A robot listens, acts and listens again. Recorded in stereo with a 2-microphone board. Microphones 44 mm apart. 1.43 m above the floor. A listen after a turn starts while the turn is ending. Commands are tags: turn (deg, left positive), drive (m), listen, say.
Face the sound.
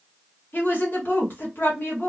<turn deg="50"/>
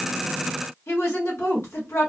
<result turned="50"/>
<turn deg="80"/>
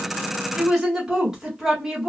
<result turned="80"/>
<turn deg="-15"/>
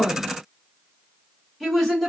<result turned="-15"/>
<say>Facing the woman speaking.</say>